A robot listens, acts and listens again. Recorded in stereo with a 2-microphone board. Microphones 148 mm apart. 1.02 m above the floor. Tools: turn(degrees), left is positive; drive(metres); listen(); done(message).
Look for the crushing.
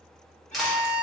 turn(degrees=30)
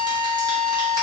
listen()
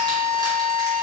listen()
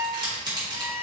turn(degrees=-30)
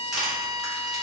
done("Found it: crushing, straight ahead.")